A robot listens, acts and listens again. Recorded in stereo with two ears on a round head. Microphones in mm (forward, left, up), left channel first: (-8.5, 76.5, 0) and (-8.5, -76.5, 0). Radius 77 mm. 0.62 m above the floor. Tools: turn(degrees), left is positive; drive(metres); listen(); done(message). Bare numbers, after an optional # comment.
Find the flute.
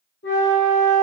# The flute: about 60° left or 120° left.
turn(60)
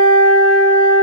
# So it is at 10° left.
turn(10)
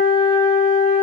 done("Found it: a flute, straight ahead, 1 to 2 m away.")